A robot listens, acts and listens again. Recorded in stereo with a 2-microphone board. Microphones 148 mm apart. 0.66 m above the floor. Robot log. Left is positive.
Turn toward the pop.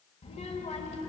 cmd idle
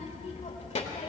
cmd idle
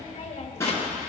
note: The pop: about 20° left or 160° left.
cmd yaw +20
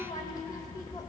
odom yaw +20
cmd idle
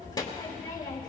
end: I heard a pop, but can't make it out now. It was about straight ahead or 140° left.